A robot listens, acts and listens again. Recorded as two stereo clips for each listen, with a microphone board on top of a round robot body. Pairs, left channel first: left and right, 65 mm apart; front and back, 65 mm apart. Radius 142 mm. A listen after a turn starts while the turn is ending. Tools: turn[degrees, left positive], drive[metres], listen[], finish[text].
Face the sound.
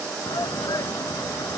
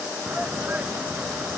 Thought: The shout: 115° left.
Action: turn[115]
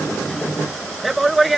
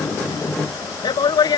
Action: finish[Facing the shout.]